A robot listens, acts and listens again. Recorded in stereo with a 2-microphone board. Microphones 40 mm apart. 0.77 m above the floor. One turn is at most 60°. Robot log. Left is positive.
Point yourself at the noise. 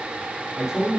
cmd yaw -30
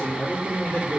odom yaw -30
note: So it is at 30° left.
cmd yaw +30
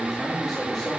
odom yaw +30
note: The man speaking is now 10° left.
cmd yaw +10
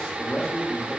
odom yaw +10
note: The man speaking is now 25° left.
cmd yaw +25
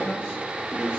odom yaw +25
note: The man speaking is now 30° left.
cmd yaw +30
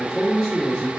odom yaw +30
end: Facing the man speaking.